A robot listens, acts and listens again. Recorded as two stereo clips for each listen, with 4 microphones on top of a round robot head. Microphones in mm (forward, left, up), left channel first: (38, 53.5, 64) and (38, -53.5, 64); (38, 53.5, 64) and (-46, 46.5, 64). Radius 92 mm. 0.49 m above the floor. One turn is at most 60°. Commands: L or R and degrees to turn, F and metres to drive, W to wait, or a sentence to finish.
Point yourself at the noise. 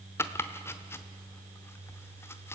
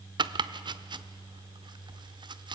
L60
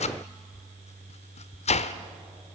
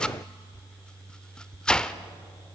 L60
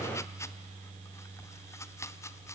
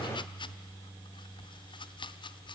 L25
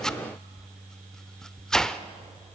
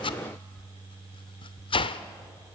Facing the chopping.